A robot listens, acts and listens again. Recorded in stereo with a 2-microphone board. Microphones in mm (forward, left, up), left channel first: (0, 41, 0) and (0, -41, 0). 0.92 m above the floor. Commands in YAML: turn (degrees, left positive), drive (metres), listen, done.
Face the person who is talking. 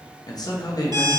turn: 55
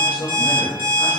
turn: 65
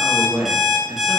turn: -10
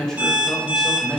done: "Facing the man speaking."